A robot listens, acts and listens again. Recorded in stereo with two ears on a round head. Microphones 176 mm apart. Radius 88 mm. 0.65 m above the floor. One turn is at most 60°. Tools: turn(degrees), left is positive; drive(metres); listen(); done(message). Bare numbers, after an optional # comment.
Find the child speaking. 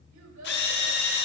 turn(-60)
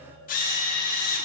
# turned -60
# Nothing new. It was at 30° right.
turn(-30)
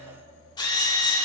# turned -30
listen()
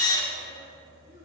done("I heard a child speaking from this way, but can't make it out now.")